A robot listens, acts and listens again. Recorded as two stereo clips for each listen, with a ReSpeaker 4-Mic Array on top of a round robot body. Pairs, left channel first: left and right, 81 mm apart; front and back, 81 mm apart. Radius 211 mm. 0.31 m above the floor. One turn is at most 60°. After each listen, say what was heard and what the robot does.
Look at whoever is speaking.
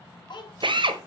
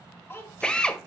The child speaking: 60° left. Turn 60° left.
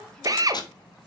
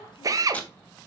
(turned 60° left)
Keep listening.
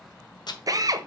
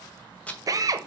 Keep listening.
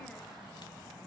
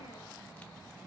Facing where the child speaking came from. I can't hear it now.